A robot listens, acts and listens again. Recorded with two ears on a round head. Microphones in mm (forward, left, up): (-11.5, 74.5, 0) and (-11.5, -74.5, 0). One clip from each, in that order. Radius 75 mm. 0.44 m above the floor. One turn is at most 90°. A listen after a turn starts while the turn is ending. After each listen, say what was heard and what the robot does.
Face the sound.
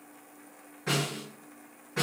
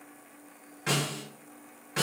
The snare drum: about 60° right or 120° right. Turn 60° right.
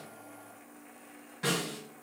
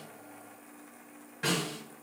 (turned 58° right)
Facing the snare drum.